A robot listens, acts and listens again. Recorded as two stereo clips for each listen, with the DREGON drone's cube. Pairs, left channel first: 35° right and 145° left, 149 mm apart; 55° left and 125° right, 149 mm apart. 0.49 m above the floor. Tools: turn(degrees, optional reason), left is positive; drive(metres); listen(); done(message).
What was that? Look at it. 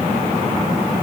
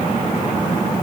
listen()
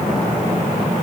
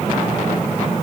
listen()
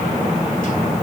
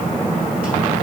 done("I can't make out anything.")